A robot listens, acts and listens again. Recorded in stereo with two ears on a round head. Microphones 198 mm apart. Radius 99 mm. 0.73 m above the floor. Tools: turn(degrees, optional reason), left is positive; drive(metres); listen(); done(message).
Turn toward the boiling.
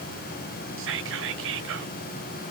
listen()
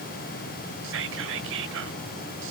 listen()
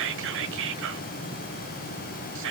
done("I can't make out boiling to turn to.")